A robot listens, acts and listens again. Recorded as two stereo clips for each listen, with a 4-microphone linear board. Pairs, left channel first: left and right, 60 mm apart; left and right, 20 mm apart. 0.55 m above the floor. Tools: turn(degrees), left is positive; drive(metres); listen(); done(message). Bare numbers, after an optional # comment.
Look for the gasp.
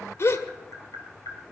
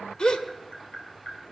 # The gasp: about 50° left or 130° left.
turn(50)
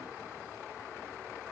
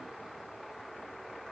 listen()
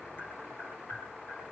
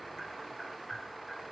done("I heard a gasp, but can't make it out now. It was about straight ahead or 80° left.")